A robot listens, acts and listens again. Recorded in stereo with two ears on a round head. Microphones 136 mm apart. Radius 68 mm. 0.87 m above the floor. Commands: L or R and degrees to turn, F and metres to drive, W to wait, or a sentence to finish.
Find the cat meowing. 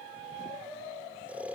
W
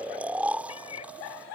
L40
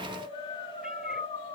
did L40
W
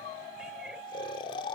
W
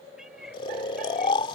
Facing the cat meowing.